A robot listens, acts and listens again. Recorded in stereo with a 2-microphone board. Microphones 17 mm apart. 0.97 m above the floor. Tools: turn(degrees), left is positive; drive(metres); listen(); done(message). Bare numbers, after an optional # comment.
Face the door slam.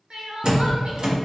# The door slam: about 45° right or 135° right.
turn(-45)
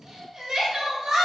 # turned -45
listen()
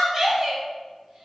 done("I heard a door slam, but can't make it out now. It was about straight ahead or 90° right.")